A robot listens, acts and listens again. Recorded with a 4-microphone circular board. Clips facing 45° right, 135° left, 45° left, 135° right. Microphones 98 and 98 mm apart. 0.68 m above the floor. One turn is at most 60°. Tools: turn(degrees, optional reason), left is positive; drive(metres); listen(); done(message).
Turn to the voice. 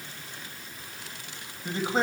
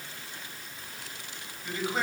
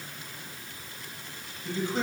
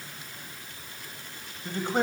turn(degrees=-60, reason="The man speaking: 105° right.")
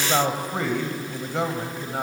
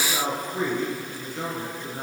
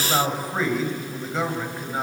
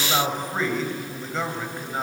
turn(degrees=-40, reason="The man speaking is now 40° right.")
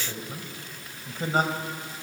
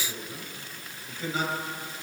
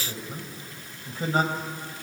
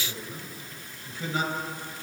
done("Found it: a man speaking, straight ahead, over 4 m away.")